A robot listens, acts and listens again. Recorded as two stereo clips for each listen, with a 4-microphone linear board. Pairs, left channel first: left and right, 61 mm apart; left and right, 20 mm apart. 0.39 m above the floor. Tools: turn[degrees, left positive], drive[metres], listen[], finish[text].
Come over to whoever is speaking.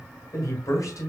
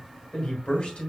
Thought: The man speaking: about 65° left or 115° left.
Action: turn[65]
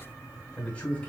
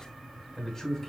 Thought: So it is at 20° left.
Action: turn[20]
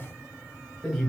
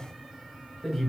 Action: drive[1.0]
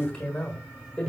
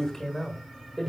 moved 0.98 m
Thought: The man speaking is now 20° left.
Action: turn[20]
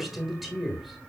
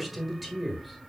Action: drive[1.0]
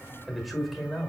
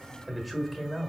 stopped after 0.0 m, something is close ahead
Action: finish[Arrived at the man speaking, straight ahead.]